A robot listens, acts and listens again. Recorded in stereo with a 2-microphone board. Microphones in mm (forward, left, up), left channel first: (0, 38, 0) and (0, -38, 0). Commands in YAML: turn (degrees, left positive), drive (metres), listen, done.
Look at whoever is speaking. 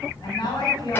turn: 65
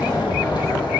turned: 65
listen: true
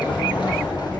listen: true
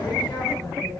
turn: 50
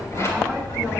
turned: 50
listen: true
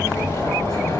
listen: true
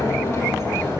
done: "I heard a woman speaking from this way, but can't make it out now."